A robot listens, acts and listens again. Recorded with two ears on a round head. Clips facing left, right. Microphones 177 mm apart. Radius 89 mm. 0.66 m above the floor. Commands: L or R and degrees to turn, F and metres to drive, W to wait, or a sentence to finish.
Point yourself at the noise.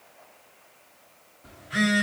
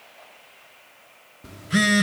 R55
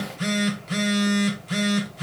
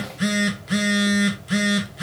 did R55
R10
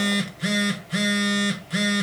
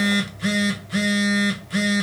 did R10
Facing the phone buzzing, 1 to 2 m away.